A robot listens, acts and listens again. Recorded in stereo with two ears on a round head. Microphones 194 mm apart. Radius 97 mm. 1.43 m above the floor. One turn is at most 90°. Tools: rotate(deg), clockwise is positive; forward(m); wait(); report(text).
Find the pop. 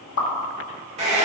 rotate(-70)
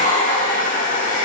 wait()
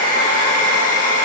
report("I heard a pop, but can't make it out now. It was about straight ahead or 40° left.")